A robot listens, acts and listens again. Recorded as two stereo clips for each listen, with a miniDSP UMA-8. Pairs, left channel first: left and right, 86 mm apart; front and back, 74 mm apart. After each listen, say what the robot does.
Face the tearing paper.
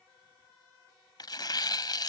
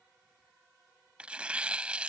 Turn 110° left.
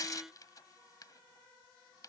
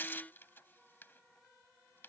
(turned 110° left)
Turn 55° left.
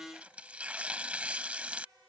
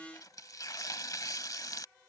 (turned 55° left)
Turn 20° right.
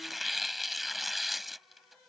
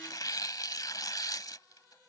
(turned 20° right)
Found it: tearing paper, straight ahead.